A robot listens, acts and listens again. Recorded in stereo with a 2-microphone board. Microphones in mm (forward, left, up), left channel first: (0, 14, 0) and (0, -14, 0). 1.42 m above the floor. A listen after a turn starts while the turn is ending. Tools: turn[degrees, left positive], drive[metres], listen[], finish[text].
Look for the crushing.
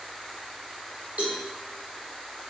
Action: listen[]
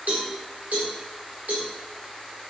Action: listen[]
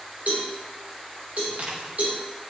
Thought: The crushing: about 65° right or 115° right.
Action: turn[-65]
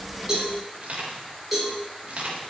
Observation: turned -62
Thought: So it is at 50° right.
Action: turn[-50]
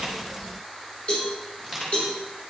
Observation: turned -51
Action: finish[Found it: crushing, straight ahead, 2 to 4 m away.]